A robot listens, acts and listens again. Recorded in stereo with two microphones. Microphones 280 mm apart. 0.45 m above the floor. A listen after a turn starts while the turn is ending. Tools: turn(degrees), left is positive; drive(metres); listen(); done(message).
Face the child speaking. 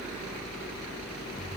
listen()
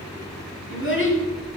turn(degrees=45)
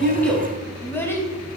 turn(degrees=10)
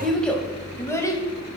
turn(degrees=10)
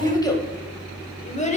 turn(degrees=25)
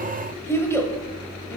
turn(degrees=10)
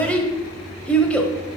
done("Facing the child speaking, 1 to 2 m away.")